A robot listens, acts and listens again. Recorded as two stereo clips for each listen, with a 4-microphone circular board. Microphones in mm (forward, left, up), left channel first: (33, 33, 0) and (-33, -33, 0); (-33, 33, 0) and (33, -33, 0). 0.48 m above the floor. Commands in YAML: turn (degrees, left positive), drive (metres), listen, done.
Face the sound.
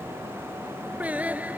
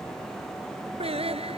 turn: -60
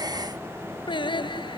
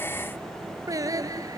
turn: 10
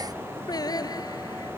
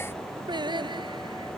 done: "Facing the singing."